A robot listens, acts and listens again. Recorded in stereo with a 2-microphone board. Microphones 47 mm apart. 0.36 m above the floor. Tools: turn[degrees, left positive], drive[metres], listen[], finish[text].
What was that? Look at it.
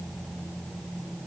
Action: listen[]
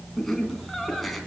Action: turn[30]
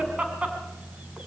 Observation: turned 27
Thought: So it is at 25° right.
Action: turn[-25]
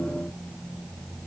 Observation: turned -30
Action: listen[]
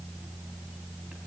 Action: listen[]
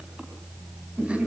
Thought: The laughter is now 25° right.
Action: turn[-25]
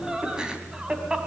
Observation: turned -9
Thought: The laughter is now 15° right.
Action: turn[-15]
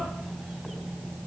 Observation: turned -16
Action: listen[]
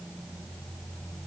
Action: listen[]
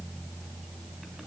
Action: finish[I heard laughter from this way, but can't make it out now.]